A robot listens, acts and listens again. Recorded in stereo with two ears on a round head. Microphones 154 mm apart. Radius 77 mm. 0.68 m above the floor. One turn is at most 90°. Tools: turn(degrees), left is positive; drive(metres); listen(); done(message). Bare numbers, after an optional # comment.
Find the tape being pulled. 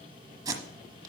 # The tape being pulled: about 25° right or 155° right.
turn(-25)
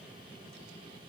listen()
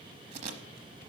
# So it is at 130° right.
turn(-90)
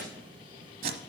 # The tape being pulled is now 60° right.
turn(-60)
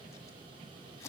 listen()
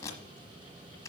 # The tape being pulled is now 20° left.
turn(20)
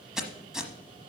done("Facing the tape being pulled.")